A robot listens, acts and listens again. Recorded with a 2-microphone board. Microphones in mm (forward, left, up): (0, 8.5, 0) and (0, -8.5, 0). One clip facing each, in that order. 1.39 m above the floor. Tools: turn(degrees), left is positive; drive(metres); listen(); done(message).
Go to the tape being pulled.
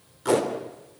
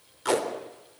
turn(degrees=-20)
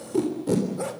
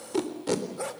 turn(degrees=-140)
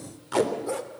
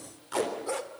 turn(degrees=15)
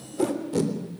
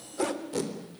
drive(metres=1.0)
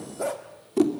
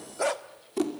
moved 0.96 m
drive(metres=1.0)
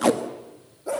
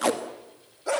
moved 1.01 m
drive(metres=1.0)
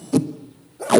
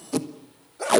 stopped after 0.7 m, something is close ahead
done("I am next to the tape being pulled.")